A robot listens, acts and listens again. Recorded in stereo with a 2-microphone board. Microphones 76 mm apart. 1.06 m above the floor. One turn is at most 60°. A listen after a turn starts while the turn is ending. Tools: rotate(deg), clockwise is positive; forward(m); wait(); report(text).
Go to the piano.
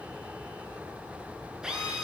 wait()
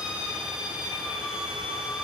wait()
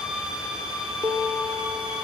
rotate(60)
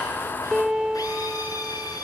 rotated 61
forward(1.0)
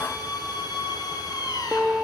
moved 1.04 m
rotate(10)
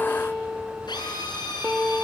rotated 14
forward(1.0)
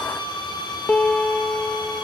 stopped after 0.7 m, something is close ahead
rotate(-20)
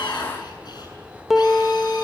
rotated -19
report("I am next to the piano.")